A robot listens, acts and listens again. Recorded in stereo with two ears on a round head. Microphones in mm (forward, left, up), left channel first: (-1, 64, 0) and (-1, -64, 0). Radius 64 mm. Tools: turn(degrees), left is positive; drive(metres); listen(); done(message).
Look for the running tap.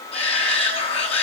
listen()
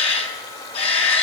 listen()
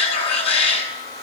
done("I can't make out a running tap, only a shout.")